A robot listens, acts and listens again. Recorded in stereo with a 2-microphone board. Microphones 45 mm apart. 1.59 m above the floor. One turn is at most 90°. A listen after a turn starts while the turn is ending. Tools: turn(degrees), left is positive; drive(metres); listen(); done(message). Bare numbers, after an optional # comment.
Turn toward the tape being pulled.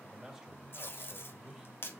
# The tape being pulled: about 50° left or 130° left.
turn(50)
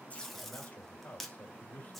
done("Found it: tape being pulled, straight ahead.")